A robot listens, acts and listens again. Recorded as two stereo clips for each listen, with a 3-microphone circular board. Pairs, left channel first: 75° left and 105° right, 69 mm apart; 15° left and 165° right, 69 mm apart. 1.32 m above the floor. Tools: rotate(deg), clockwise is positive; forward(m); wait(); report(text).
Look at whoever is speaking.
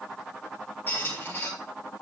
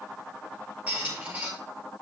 wait()
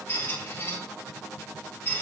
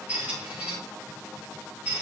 wait()
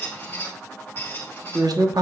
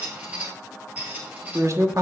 rotate(120)
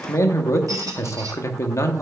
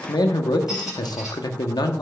rotate(-30)
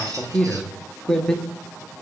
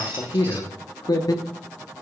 report("Facing the man speaking.")